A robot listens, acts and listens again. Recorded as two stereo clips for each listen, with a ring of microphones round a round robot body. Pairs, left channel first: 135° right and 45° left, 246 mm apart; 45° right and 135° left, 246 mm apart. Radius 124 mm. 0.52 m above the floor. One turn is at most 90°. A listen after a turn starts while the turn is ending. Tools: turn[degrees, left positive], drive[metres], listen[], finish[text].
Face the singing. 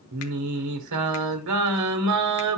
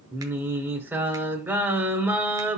Thought: The singing: 55° left.
Action: turn[55]
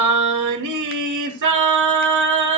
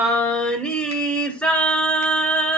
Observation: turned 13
Thought: The singing is now 40° left.
Action: turn[40]
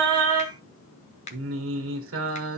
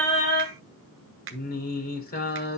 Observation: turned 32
Thought: The singing is now 10° left.
Action: turn[10]
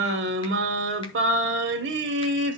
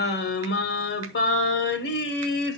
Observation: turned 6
Action: finish[Found it: singing, straight ahead.]